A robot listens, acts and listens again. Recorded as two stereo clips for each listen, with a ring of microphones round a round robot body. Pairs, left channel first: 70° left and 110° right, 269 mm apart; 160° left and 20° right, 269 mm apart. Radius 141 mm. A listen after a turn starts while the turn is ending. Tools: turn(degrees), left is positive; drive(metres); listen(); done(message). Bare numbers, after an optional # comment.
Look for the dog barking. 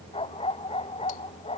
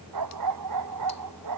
done("Facing the dog barking.")